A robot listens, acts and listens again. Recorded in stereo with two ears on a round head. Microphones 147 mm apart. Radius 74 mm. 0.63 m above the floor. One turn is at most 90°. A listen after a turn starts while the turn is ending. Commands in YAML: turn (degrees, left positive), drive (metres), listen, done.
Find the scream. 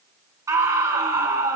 turn: -20
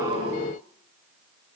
listen: true
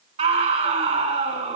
turn: -90
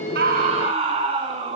turn: -35
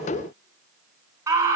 turn: -20
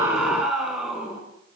done: "Facing the scream, over 4 m away."